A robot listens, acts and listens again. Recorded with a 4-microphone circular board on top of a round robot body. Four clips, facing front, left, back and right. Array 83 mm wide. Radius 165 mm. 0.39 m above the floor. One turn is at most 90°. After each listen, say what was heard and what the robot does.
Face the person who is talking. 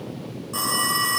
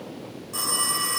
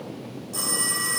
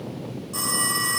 Keep listening.
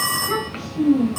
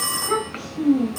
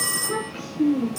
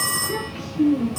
The child speaking: 60° left. Turn 60° left.
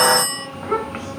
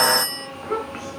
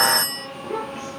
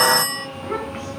Facing the child speaking.